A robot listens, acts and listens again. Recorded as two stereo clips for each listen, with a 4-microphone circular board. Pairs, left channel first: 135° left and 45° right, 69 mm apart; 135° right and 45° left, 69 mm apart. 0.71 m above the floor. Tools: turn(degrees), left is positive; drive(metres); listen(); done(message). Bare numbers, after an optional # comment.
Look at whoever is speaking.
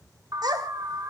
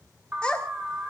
# The child speaking: 60° right.
turn(-60)
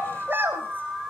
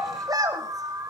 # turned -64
# The child speaking is now 15° left.
turn(15)
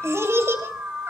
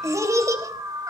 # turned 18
done("Facing the child speaking, 2 to 4 m away.")